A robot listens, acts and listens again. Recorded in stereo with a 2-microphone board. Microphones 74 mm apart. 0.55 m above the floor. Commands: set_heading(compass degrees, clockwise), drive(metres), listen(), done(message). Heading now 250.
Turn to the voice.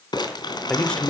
set_heading(220)
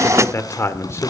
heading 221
set_heading(86)
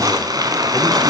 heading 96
set_heading(86)
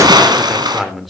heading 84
done("Facing the man speaking.")